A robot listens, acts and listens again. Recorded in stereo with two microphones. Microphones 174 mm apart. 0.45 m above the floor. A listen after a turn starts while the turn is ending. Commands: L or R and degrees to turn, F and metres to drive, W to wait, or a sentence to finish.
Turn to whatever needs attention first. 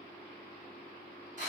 W
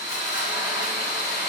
W
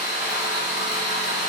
I can't make out anything urgent to turn to.